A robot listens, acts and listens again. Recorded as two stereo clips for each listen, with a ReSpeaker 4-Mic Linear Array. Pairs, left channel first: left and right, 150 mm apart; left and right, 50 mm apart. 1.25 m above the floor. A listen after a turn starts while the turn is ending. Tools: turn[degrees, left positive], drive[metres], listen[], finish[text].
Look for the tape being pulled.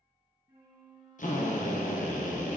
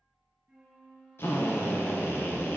Action: listen[]
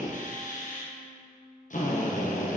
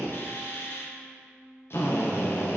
Action: listen[]
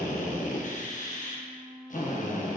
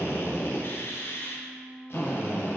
Action: finish[I can't make out tape being pulled to turn to.]